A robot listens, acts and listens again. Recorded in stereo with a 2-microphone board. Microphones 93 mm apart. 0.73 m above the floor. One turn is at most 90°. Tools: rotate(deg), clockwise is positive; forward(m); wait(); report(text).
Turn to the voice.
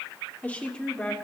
rotate(-30)
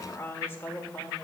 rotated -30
rotate(-90)
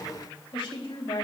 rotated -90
rotate(-75)
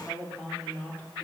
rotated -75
rotate(-20)
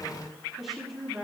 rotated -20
report("Found it: a woman speaking, straight ahead.")